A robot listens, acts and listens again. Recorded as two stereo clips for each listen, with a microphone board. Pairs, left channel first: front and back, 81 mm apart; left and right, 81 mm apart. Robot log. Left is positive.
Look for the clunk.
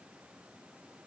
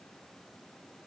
cmd idle
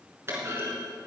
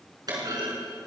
note: The clunk: 120° right.
cmd yaw -120
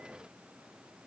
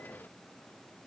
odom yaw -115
end: Facing where the clunk came from. I can't hear it now.